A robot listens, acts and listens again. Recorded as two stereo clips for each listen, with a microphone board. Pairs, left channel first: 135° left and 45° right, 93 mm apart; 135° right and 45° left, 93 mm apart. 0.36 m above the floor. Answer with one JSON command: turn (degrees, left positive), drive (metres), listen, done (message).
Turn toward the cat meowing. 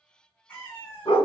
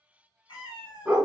{"turn": -155}
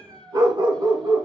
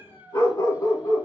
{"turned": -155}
{"done": "Facing the cat meowing."}